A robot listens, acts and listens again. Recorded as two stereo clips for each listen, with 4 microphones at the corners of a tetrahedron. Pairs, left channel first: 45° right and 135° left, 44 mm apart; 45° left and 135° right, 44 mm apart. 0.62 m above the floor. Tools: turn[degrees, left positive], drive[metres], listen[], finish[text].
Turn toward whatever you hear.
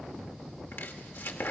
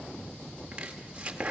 Thought: The chopping: 70° right.
Action: turn[-70]
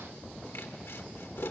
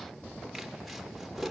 Thought: The chopping is now 45° right.
Action: turn[-45]
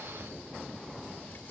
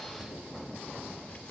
Action: finish[Facing the chopping.]